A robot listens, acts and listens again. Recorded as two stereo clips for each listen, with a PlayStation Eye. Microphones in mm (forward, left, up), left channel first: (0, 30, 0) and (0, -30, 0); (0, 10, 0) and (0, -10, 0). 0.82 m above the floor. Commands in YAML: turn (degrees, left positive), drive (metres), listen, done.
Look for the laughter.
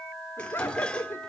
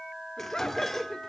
turn: 40
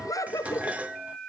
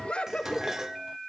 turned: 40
turn: 100
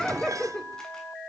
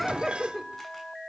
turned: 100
turn: 10
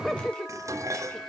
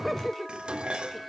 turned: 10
done: "Found it: laughter, straight ahead, 2 to 4 m away."